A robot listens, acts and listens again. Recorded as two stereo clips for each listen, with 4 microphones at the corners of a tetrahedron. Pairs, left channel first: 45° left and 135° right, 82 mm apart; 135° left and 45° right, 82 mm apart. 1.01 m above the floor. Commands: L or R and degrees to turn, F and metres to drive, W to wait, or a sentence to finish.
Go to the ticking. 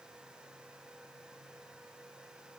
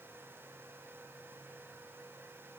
W
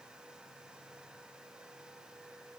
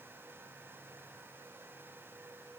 W
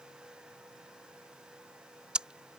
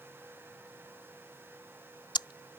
L150
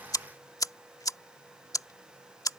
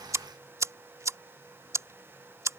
F1.0
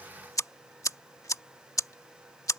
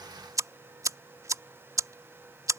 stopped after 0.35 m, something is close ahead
Blocked. The ticking is further on, straight ahead.